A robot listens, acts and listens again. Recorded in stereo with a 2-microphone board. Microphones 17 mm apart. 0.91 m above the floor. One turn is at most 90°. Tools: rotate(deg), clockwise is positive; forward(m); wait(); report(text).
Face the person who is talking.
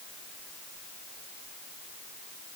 wait()
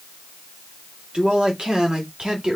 rotate(55)
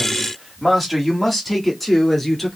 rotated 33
report("Found it: a man speaking, straight ahead.")